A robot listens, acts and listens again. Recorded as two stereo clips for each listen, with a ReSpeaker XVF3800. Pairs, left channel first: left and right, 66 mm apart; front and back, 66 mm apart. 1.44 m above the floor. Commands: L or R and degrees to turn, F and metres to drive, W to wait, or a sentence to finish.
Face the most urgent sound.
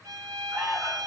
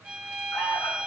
R35
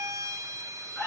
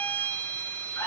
Found it: an alarm, straight ahead, 2 to 4 m away.